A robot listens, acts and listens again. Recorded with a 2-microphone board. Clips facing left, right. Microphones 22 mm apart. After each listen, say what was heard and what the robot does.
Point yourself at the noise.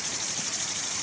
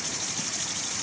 Keep listening.
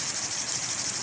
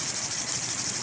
Keep listening.
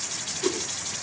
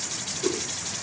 The whoosh: about 55° left or 125° left. Turn 55° left.
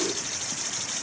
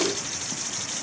Keep listening.
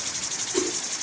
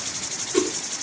Facing the whoosh, over 4 m away.